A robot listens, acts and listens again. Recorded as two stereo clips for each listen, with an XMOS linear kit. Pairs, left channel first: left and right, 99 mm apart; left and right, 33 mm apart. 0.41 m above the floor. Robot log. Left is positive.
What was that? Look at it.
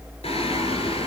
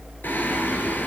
note: The singing: about 75° left or 105° left.
cmd yaw +75
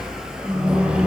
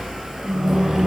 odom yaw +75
note: So it is at 10° right.
cmd yaw -10
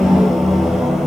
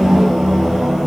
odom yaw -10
end: Facing the singing, 2 to 4 m away.